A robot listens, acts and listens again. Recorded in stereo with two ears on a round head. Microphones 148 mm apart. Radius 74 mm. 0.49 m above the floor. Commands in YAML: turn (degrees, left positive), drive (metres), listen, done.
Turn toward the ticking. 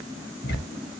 turn: 60
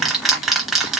done: "Facing the ticking."